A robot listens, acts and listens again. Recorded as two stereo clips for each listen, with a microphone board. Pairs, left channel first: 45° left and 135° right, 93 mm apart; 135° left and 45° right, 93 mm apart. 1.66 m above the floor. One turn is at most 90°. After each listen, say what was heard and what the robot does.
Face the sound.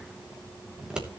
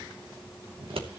The scissors: 55° right. Turn 55° right.
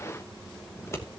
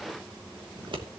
The scissors is now 15° right. Turn 15° right.
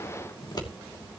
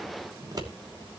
Facing the scissors.